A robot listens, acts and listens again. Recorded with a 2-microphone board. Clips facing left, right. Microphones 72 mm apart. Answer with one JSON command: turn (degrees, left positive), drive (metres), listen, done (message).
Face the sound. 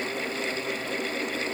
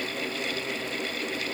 {"listen": true}
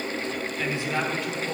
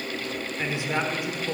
{"turn": -30}
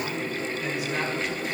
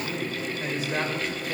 {"listen": true}
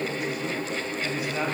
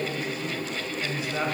{"turn": -150}
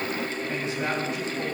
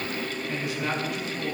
{"turn": 30}
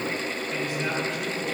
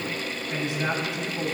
{"turn": -20}
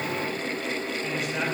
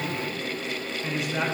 {"done": "Found it: a man speaking, straight ahead, over 4 m away."}